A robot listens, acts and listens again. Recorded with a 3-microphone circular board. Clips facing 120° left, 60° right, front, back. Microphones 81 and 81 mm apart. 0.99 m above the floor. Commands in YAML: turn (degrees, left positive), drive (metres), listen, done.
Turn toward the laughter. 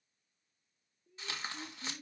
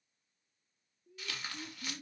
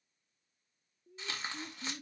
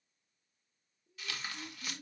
turn: 35
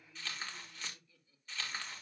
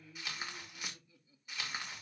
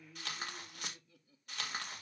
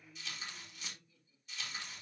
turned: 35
turn: 10
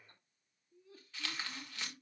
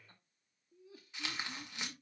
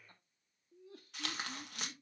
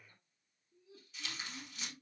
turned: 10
turn: 30
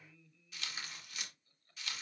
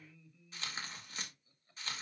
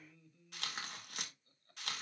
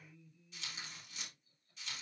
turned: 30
turn: 15
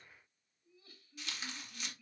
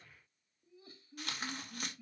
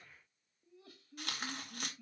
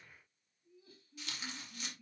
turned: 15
done: "Facing the laughter, 2 to 4 m away."